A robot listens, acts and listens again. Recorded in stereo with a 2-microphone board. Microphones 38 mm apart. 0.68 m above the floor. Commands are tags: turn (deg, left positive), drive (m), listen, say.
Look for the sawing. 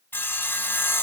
<turn deg="70"/>
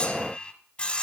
<turn deg="30"/>
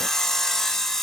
<turn deg="10"/>
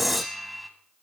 <say>Facing the sawing.</say>